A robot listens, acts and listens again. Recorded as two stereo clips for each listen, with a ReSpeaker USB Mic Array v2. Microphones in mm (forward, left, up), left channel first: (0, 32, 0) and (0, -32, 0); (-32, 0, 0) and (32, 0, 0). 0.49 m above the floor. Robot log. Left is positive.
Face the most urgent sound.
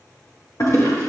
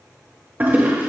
cmd idle
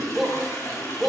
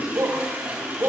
end: Facing the shout.